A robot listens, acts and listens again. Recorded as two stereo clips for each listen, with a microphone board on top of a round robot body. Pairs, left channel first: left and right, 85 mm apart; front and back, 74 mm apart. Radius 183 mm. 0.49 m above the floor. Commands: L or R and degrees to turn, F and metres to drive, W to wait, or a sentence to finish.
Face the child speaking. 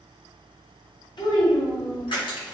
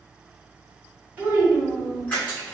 L105
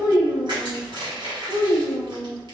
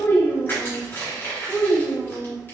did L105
R80
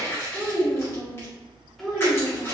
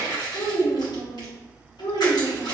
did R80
Facing the child speaking.